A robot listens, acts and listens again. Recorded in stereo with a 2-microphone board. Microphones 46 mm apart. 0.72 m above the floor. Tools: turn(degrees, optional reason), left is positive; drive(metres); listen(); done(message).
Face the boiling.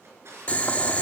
turn(degrees=30, reason="The boiling: about 30° left or 150° left.")
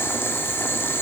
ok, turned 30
turn(degrees=115, reason="So it is at 115° left.")
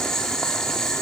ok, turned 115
turn(degrees=10, reason="The boiling is now 10° left.")
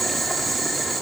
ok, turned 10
done("Facing the boiling.")